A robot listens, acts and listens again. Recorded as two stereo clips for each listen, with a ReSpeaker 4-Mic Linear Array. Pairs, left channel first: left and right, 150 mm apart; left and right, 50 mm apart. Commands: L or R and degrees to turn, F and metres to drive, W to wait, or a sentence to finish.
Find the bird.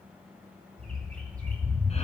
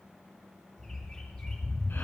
L30
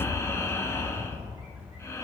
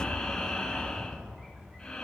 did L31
R20
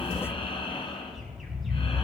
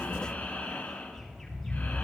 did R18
Found it: a bird, straight ahead.